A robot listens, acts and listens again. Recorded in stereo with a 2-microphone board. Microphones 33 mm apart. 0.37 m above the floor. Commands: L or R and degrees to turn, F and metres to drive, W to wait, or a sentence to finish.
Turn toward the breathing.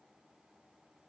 W
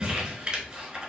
W
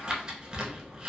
I can't make out breathing, only crumpling.